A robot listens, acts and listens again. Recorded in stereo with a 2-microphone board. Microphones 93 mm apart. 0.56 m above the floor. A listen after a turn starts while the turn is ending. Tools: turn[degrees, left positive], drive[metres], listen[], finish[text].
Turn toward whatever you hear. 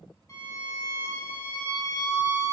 Thought: The violin: about 35° left or 145° left.
Action: turn[35]
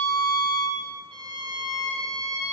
Thought: So it is at 105° left.
Action: turn[105]
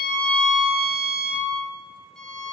Action: finish[Facing the violin.]